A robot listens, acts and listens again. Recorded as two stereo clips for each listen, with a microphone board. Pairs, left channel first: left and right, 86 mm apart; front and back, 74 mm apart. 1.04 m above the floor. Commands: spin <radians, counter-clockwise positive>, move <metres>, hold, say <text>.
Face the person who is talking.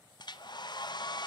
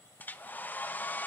hold
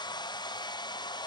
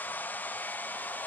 hold
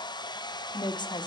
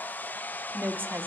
spin 2.09
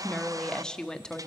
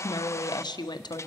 spin 0.17
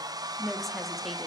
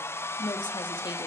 say Facing the woman speaking.